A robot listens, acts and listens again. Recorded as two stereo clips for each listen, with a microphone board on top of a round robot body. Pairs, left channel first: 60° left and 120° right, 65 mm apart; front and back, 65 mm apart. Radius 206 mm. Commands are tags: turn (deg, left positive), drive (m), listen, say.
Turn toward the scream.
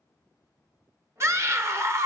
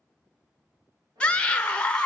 <turn deg="-70"/>
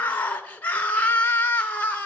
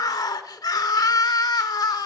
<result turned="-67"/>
<say>Found it: a scream, straight ahead.</say>